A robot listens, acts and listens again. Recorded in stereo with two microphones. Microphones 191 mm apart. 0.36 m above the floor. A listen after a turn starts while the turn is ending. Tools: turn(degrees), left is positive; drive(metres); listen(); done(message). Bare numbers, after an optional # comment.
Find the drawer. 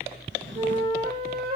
turn(-90)
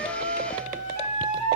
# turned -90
listen()
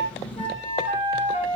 done("Found it: a drawer, straight ahead.")